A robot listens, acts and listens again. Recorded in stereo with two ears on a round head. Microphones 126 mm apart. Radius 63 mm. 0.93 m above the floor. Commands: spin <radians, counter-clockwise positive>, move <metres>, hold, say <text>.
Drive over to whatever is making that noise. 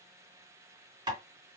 spin -0.61
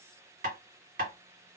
spin -1.92
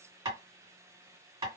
spin -0.44
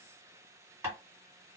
spin -0.35
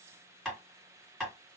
move 1.0
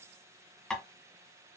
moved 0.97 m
move 1.0
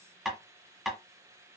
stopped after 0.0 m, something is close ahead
say Arrived at the tapping, straight ahead.